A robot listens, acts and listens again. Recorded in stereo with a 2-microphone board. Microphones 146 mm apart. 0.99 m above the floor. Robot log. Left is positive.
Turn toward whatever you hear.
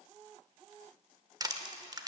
note: The crushing: about 25° right or 155° right.
cmd yaw -25
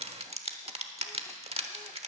note: So it is at 125° right.
cmd yaw -125
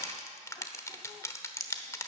note: The crushing is now 25° left.
cmd yaw +25
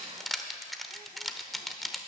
end: Facing the crushing, 1 to 2 m away.